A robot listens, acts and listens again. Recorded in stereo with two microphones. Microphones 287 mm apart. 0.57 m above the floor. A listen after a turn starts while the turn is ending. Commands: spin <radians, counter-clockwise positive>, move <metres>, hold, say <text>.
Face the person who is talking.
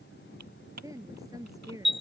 spin -0.52
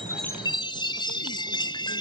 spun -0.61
hold
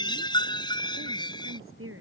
spin -2.36
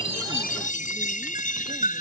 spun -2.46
hold
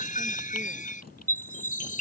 hold
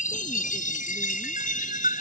say I heard a woman speaking from this way, but can't make it out now.